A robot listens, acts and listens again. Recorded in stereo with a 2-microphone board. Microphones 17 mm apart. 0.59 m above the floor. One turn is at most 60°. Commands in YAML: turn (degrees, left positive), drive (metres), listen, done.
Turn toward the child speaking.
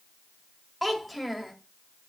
turn: 30
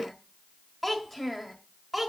turn: 30
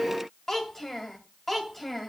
turn: 60
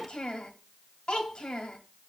turn: 60
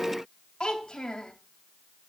turn: 40
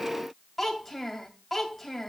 done: "Facing the child speaking, 2 to 4 m away."